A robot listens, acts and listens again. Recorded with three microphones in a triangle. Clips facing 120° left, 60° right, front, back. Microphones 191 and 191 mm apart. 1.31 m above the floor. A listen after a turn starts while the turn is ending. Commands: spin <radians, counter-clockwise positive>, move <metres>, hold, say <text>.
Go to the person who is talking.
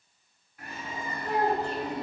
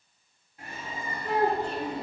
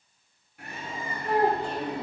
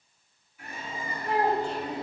spin -0.61
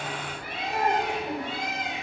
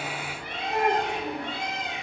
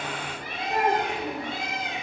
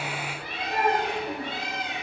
move 1.0
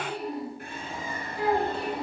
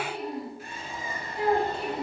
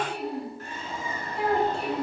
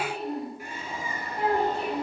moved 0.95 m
move 1.0
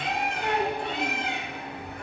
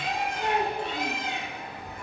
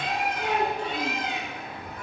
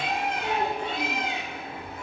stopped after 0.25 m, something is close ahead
say Arrived at the child speaking, straight ahead.